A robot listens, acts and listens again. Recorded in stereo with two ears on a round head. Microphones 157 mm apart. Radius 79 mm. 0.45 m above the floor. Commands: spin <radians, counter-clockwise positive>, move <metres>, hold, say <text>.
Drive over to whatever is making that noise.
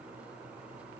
hold
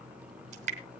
spin -0.70
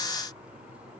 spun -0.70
hold
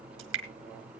spin -1.75
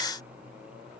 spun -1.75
hold
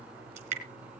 spin -0.70
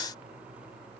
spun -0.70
hold
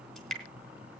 move 1.0
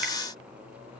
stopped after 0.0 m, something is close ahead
hold
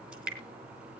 say Blocked. The dripping is further on, straight ahead.